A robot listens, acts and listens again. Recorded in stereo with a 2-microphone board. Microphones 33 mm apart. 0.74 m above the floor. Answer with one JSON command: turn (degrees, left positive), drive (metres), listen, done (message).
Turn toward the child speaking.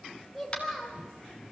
{"turn": 30}
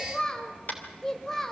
{"turn": 30}
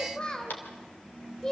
{"turn": 165}
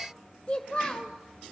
{"turn": 30}
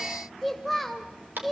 {"done": "Facing the child speaking."}